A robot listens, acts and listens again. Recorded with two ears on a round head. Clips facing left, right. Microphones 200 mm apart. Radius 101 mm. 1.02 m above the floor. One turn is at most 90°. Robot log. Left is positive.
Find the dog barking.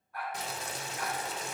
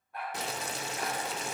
note: The dog barking: about 20° right or 160° right.
cmd yaw -20
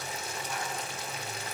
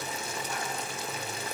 cmd idle
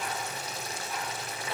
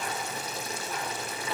cmd idle
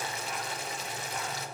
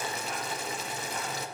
end: I heard a dog barking, but can't make it out now. It was about straight ahead or 140° right.